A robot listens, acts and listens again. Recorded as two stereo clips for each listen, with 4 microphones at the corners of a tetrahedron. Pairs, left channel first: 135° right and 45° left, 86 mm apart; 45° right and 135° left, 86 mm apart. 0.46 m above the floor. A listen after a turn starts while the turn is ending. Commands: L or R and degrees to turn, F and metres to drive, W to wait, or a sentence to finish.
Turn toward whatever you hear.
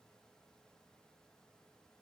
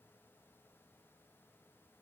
W
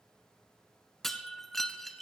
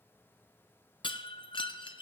R45
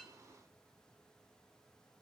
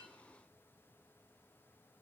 Facing where the breaking glass came from. I can't hear it now.